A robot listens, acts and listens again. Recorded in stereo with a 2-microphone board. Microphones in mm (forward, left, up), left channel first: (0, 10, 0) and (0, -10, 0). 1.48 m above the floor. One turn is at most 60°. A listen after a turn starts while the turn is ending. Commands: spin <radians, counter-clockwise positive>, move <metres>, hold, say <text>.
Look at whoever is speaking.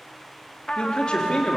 spin 0.87
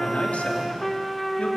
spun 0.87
hold
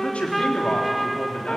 spin 1.05
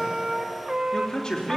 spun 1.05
spin 0.61
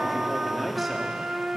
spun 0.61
say Found it: a man speaking, straight ahead, 2 to 4 m away.